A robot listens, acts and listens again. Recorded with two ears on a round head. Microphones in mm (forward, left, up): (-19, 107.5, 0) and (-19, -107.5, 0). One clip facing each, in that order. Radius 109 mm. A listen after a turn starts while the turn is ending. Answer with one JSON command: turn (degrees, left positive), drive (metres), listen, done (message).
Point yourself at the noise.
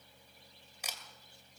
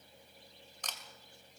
{"turn": 30}
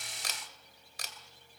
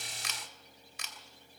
{"turn": 145}
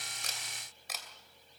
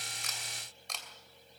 {"done": "Facing the camera shutter, 2 to 4 m away."}